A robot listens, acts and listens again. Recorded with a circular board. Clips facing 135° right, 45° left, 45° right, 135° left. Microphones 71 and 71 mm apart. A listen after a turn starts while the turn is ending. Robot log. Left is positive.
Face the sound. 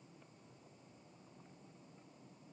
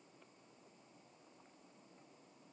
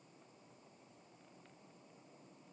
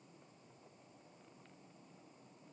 cmd idle
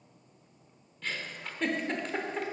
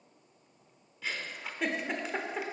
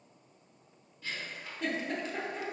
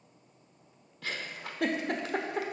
note: The giggle: 130° left.
cmd yaw +130
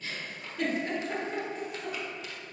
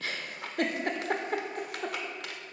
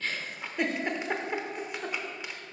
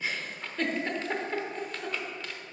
note: The giggle is now 30° left.
cmd yaw +30
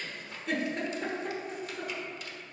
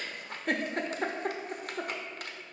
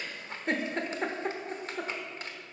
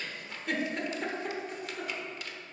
note: The giggle is now 10° left.
cmd yaw +10
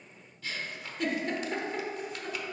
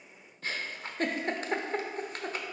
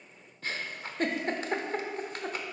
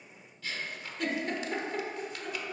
end: Facing the giggle.